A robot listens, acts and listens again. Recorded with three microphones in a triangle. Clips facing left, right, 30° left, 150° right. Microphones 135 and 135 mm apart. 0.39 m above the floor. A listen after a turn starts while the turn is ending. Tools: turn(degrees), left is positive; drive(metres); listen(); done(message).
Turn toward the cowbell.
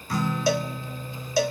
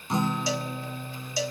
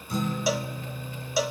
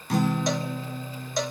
turn(degrees=115)
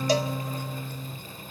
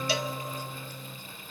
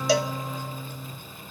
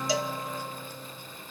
listen()
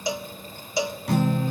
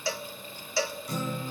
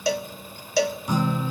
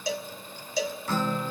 turn(degrees=20)
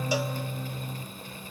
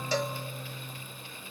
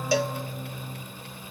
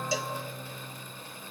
listen()
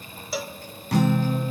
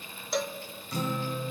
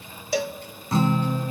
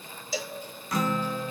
done("Found it: a cowbell, straight ahead.")